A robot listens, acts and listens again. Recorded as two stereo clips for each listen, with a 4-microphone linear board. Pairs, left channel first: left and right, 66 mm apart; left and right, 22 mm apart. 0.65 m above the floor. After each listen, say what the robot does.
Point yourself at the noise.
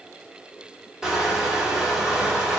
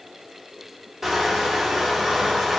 Turn 30° right.
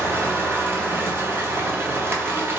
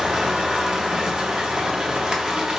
Turn 140° right.
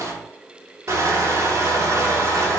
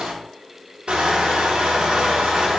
Turn 55° right.
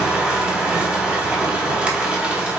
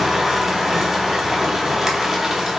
Turn 20° right.
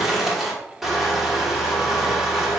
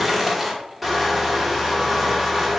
Found it: crushing, straight ahead, under 1 m away.